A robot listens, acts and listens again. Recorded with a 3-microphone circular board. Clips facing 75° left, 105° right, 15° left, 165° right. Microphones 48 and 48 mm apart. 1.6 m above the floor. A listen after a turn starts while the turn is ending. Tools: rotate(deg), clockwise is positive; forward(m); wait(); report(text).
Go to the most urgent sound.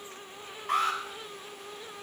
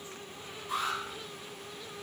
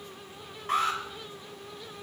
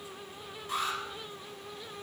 rotate(-50)
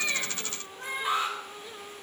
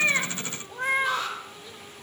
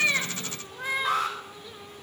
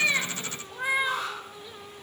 forward(1.0)
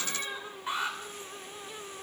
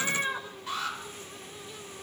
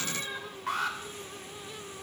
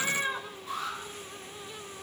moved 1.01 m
rotate(-10)
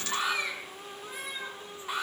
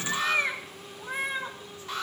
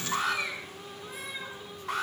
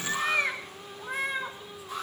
forward(1.0)
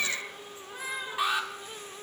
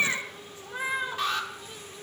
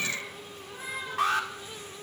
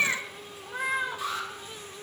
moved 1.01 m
forward(1.0)
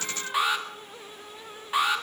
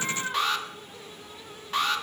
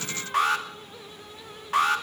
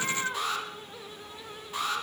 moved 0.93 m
forward(1.0)
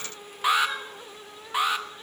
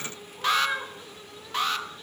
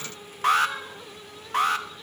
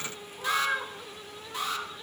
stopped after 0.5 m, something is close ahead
report("Arrived at the alarm, straight ahead.")